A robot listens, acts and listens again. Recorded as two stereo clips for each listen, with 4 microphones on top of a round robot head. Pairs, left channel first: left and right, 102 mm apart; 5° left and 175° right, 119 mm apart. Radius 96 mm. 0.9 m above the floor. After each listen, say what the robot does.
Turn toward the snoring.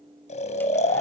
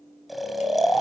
Turn 95° left.
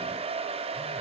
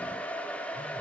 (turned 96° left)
Keep listening.
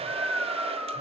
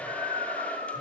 Facing the snoring, 2 to 4 m away.